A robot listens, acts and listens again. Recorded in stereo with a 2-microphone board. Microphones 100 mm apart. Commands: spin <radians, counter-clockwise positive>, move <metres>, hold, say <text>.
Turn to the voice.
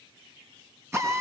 hold
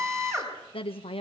spin 1.22
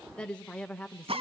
spin 0.17
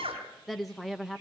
say Facing the woman speaking.